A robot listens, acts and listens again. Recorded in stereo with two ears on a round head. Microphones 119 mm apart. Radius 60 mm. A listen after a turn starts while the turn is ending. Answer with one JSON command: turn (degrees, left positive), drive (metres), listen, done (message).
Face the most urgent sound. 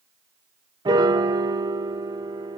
{"listen": true}
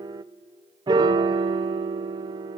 {"listen": true}
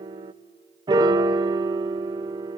{"done": "I can't make out anything urgent to turn to."}